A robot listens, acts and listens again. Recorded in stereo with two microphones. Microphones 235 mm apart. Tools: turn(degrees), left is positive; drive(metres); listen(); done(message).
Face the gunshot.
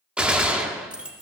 turn(degrees=-30)
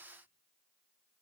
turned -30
listen()
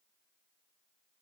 done("I heard a gunshot, but can't make it out now. It was about 25° left or 145° right.")